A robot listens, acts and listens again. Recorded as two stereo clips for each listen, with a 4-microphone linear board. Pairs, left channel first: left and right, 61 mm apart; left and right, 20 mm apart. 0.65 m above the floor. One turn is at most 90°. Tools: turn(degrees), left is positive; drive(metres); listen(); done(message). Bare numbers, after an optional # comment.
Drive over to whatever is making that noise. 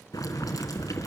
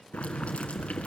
turn(90)
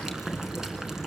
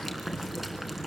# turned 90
# So it is at 10° right.
turn(-10)
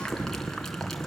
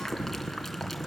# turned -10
drive(1.0)
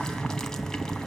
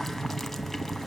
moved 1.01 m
# The boiling is now 10° left.
turn(10)
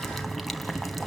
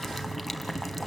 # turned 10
drive(1.0)
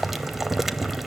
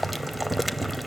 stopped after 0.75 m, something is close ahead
done("Arrived at the boiling, straight ahead.")